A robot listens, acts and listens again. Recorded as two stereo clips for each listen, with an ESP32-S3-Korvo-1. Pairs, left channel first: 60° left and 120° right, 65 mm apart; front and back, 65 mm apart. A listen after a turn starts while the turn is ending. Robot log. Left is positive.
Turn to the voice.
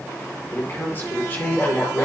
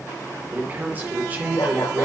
note: The man speaking: 120° left.
cmd yaw +120
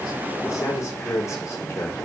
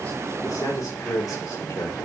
note: The man speaking is now 20° left.
cmd yaw +20
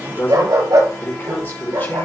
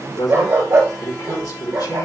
end: Found it: a man speaking, straight ahead.